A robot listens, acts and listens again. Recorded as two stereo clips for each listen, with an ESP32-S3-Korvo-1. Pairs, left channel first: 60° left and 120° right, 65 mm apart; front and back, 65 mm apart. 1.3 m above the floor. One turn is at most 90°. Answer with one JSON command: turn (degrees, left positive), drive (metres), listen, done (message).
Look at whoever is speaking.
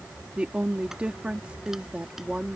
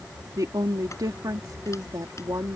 {"turn": 90}
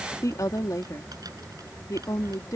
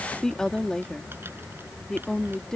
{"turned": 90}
{"turn": 80}
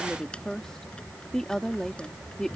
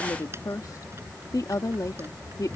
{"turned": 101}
{"turn": -20}
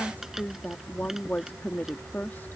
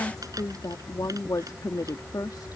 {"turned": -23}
{"done": "Found it: a woman speaking, straight ahead."}